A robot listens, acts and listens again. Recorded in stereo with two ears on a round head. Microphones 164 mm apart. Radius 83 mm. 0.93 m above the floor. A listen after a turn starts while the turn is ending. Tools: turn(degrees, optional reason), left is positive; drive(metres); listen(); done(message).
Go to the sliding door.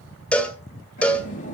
turn(degrees=40, reason="The sliding door: about 40° left or 140° left.")
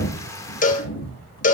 turn(degrees=100, reason="So it is at 100° left.")
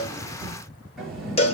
drive(metres=1.0)
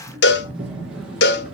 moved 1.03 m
drive(metres=1.0)
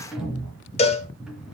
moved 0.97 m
drive(metres=1.0)
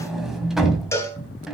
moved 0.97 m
drive(metres=1.0)
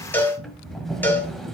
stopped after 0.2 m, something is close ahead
done("Arrived at the sliding door, straight ahead.")